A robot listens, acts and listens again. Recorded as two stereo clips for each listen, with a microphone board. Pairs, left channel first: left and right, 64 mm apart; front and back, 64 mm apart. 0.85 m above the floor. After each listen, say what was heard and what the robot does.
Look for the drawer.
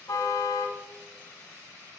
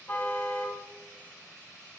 Keep listening.
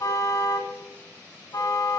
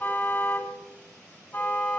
Keep listening.
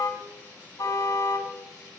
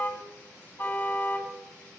I can't make out a drawer to turn to.